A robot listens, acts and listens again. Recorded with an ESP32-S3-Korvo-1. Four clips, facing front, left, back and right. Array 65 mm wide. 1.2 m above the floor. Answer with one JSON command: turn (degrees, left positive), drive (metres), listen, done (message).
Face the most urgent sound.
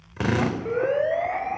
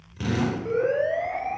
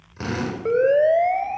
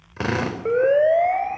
{"turn": -130}
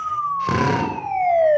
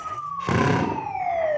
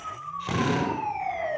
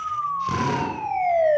{"turn": -20}
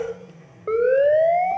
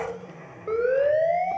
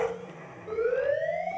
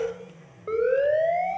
{"done": "Facing the siren, over 4 m away."}